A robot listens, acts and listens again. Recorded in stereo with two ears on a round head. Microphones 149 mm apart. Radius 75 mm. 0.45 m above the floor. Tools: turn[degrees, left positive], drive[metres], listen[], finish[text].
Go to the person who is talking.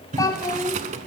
Thought: The child speaking: about 20° left or 160° left.
Action: turn[20]
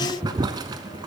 Action: listen[]
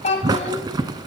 Thought: So it is at 135° left.
Action: turn[135]
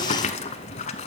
Action: listen[]
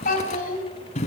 Thought: The child speaking is now 60° left.
Action: turn[60]
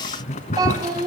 Thought: The child speaking is now 25° right.
Action: turn[-25]
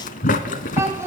Thought: The child speaking is now 15° right.
Action: turn[-15]
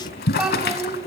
Action: drive[1.0]
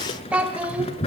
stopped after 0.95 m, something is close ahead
Thought: The child speaking is now 10° right.
Action: turn[-10]
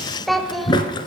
Action: finish[I am next to the child speaking.]